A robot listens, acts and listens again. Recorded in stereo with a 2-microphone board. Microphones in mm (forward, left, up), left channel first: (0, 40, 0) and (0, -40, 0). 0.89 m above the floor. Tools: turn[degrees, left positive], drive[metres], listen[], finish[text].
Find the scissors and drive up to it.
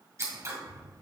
Thought: The scissors: about 35° right or 145° right.
Action: turn[-35]
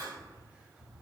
Thought: So it is at 105° right.
Action: turn[-105]
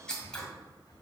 Thought: The scissors is now 10° left.
Action: turn[10]
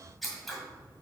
Action: drive[1.0]
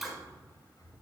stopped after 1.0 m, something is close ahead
Action: finish[I am next to the scissors.]